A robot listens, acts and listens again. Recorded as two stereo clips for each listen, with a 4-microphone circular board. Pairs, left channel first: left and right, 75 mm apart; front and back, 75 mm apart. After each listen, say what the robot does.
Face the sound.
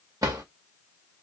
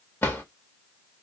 Turn 55° right.
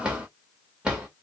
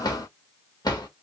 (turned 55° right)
Turn 10° right.
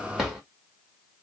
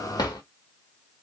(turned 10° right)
Facing the drawer.